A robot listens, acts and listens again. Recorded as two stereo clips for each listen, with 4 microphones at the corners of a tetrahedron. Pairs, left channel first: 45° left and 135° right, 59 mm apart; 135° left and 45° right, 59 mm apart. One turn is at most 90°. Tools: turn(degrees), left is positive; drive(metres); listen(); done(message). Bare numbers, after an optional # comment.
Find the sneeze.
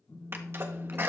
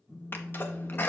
# The sneeze: straight behind.
turn(90)
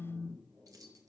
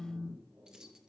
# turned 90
# Nothing new. It was at 90° left.
turn(90)
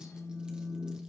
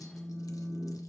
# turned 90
done("Facing where the sneeze came from. I can't hear it now.")